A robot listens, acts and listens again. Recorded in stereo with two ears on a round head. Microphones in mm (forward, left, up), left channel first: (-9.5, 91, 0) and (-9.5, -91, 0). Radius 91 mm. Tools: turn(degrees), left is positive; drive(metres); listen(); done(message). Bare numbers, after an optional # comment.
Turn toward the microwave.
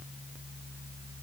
listen()
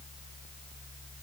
listen()
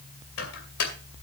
# The microwave: about 70° left or 110° left.
turn(70)
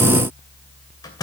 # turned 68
# So it is at 20° left.
turn(20)
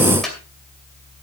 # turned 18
done("Facing the microwave.")